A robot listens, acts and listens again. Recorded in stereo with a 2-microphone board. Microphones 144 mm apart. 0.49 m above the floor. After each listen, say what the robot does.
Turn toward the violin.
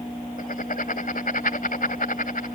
Keep listening.
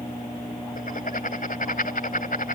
Keep listening.
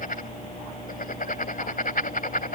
I can't make out a violin, only writing.